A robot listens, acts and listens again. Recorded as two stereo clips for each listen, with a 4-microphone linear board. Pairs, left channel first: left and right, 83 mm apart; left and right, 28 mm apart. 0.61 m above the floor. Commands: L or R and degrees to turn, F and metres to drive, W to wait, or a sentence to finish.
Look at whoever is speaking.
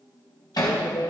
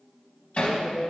L60
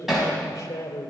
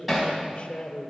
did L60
L40
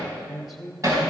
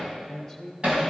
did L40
Found it: a man speaking, straight ahead, 2 to 4 m away.